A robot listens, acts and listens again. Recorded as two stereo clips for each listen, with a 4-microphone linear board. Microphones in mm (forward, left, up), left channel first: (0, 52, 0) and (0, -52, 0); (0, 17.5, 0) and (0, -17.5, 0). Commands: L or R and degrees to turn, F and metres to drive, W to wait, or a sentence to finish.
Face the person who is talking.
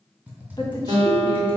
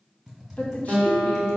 L40
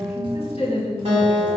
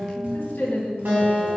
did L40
L100
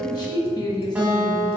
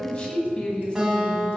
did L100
L40
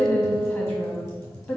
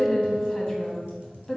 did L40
L20
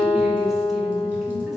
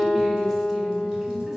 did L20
W
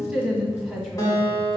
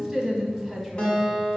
Facing the woman speaking, 1 to 2 m away.